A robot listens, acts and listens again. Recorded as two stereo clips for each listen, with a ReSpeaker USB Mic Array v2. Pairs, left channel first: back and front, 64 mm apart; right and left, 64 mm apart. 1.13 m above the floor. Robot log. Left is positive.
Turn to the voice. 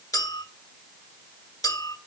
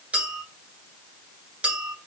cmd idle
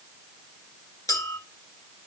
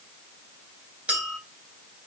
cmd idle
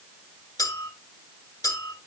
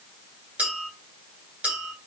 end: I can't make out anyone speaking to turn to.